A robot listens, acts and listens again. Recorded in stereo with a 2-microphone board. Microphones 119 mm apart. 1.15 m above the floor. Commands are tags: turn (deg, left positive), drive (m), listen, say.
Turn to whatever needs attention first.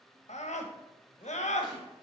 <turn deg="90"/>
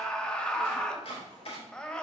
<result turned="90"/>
<turn deg="10"/>
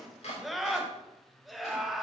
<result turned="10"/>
<say>Found it: a scream, straight ahead, 1 to 2 m away.</say>